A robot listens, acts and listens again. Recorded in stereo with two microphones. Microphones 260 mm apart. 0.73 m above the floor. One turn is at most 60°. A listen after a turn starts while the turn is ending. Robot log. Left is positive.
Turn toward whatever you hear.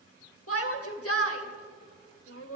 note: The shout: about 60° left or 120° left.
cmd yaw +60
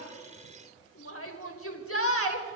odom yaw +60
note: So it is at 60° left.
cmd yaw +60
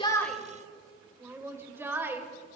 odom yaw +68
note: The shout is now 10° right.
cmd yaw -10
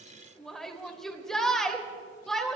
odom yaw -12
end: Found it: a shout, straight ahead.